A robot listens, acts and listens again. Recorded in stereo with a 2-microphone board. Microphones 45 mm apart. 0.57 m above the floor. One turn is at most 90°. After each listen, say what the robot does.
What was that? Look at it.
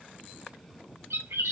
Turn 90° right.
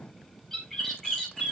Found it: a bird, straight ahead, over 4 m away.